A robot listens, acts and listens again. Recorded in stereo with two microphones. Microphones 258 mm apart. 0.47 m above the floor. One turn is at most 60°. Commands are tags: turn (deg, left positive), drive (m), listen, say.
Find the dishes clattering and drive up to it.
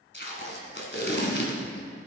<listen/>
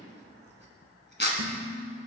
<turn deg="-60"/>
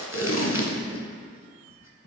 <listen/>
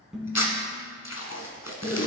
<drive m="1.0"/>
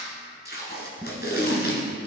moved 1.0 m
<drive m="1.0"/>
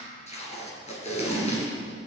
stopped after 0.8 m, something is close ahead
<listen/>
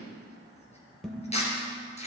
<say>Arrived at the dishes clattering, straight ahead.</say>